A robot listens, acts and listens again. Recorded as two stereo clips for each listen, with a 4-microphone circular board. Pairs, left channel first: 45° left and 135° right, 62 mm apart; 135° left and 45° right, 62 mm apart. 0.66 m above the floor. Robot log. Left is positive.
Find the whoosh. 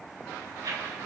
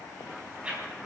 note: The whoosh: 115° right.
cmd yaw -115
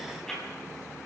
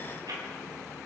note: The whoosh is now 35° right.
cmd yaw -35
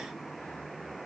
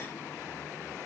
cmd idle
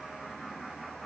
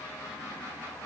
cmd idle
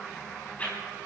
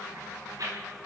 note: The whoosh is now 20° right.
cmd yaw -20
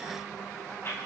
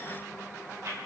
end: Facing the whoosh, over 4 m away.